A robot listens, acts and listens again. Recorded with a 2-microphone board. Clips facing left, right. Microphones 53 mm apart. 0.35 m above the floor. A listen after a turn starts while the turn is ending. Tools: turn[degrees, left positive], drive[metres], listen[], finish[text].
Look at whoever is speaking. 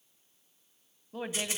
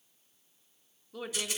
Thought: The woman speaking: about 35° left or 145° left.
Action: turn[35]
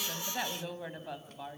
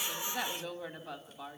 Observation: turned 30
Thought: So it is at 10° left.
Action: turn[10]
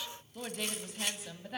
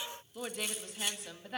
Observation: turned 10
Action: finish[Found it: a woman speaking, straight ahead, 2 to 4 m away.]